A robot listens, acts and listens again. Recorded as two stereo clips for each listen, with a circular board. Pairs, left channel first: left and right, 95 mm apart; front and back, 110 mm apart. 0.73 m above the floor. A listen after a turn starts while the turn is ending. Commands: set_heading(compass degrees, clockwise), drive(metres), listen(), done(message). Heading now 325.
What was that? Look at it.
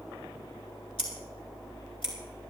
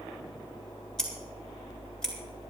set_heading(240)
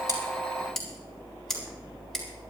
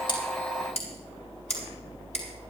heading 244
done("Found it: scissors, straight ahead.")